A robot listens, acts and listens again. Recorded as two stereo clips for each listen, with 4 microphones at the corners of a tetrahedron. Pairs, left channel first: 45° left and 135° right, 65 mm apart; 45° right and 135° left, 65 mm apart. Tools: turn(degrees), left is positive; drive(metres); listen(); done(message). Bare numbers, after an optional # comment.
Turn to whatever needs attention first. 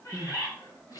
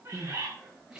# The crying: 55° left.
turn(55)
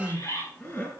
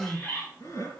# The crying is now 10° right.
turn(-10)
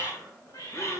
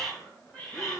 listen()
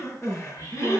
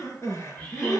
done("Facing the crying, over 4 m away.")